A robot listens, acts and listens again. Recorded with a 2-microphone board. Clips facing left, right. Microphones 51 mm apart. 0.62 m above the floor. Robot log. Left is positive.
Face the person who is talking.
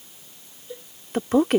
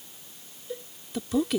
note: The woman speaking: about 50° left or 130° left.
cmd yaw +50
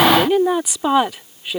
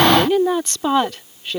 note: So it is at 10° left.
cmd yaw +10
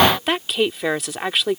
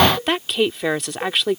end: Found it: a woman speaking, straight ahead.